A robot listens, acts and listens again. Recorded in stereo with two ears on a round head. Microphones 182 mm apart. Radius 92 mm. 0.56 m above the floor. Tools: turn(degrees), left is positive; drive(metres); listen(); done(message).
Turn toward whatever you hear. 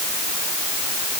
listen()
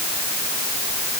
listen()
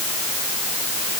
done("I can't make out anything to turn to.")